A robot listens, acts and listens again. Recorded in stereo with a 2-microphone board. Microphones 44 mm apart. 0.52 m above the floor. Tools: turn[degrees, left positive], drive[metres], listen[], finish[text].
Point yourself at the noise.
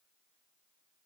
Action: listen[]
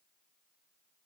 Action: listen[]
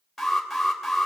Action: turn[30]
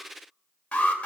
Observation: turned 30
Thought: So it is at 145° left.
Action: turn[145]
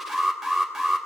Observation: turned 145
Action: finish[Found it: an alarm, straight ahead, 2 to 4 m away.]